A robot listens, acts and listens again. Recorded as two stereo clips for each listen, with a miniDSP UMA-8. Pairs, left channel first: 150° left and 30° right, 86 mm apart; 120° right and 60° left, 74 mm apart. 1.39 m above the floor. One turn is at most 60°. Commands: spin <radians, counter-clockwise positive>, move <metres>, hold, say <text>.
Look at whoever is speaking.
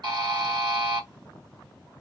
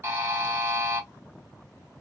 hold
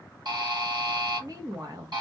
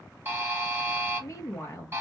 spin -1.05
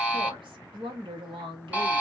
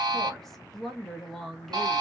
spin -0.52
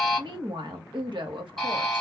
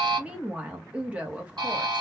spin -0.17
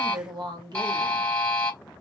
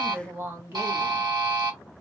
say Facing the woman speaking, 1 to 2 m away.